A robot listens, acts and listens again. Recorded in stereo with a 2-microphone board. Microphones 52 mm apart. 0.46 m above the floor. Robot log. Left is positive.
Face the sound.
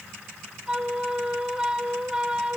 note: The flute: about 15° right or 165° right.
cmd yaw -15
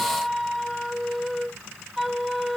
end: Found it: a flute, straight ahead.